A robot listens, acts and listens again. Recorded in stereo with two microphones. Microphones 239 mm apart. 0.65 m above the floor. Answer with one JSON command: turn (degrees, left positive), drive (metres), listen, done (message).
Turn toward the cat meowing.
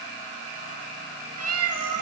{"turn": -70}
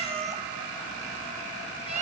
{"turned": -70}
{"turn": -25}
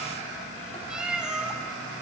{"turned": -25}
{"done": "Facing the cat meowing."}